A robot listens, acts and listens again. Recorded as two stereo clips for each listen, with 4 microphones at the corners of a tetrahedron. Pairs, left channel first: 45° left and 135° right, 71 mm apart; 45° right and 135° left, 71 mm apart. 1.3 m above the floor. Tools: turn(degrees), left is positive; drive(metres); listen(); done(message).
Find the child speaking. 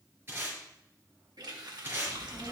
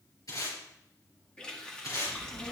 turn(degrees=-45)
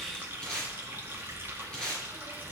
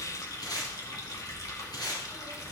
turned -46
done("Found it: a child speaking, straight ahead, over 4 m away.")